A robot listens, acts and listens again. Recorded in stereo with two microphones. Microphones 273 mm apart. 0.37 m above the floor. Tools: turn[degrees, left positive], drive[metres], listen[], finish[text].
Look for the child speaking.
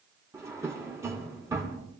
Action: listen[]
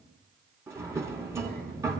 Thought: The child speaking: about 35° right or 145° right.
Action: turn[-35]
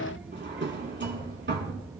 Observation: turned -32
Thought: So it is at 10° right.
Action: turn[-10]
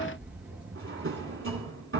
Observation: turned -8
Action: finish[Facing the child speaking.]